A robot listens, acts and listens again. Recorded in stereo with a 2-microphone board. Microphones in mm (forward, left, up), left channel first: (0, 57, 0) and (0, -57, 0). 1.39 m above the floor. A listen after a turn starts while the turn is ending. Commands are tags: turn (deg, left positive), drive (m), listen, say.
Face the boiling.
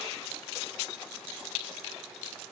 <listen/>
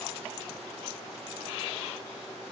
<listen/>
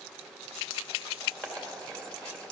<turn deg="30"/>
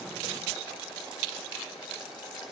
<turn deg="140"/>
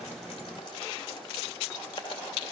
<turn deg="45"/>
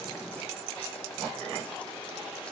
<listen/>
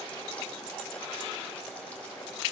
<turn deg="10"/>
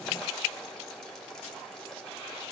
<say>Found it: boiling, straight ahead, 2 to 4 m away.</say>